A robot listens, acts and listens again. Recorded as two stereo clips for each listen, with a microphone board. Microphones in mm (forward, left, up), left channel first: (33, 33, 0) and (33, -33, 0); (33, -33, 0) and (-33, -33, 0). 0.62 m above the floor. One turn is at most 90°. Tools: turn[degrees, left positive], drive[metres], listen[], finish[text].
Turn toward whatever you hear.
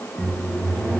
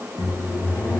Thought: The microwave: 10° left.
Action: turn[10]
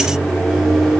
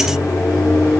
Action: finish[Found it: a microwave, straight ahead.]